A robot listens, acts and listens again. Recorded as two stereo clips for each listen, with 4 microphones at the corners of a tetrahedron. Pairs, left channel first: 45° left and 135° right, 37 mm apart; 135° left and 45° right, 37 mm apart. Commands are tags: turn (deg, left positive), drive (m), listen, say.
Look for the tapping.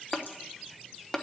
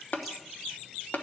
<turn deg="115"/>
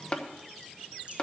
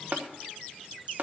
<turn deg="-15"/>
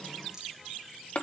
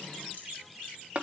<say>Found it: tapping, straight ahead, 1 to 2 m away.</say>